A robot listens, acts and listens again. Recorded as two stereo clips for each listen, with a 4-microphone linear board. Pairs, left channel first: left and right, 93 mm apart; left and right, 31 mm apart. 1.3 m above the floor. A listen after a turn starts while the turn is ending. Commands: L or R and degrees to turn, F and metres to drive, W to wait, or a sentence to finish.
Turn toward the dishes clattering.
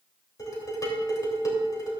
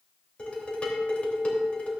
L40
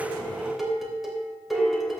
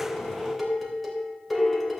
Found it: dishes clattering, straight ahead, 2 to 4 m away.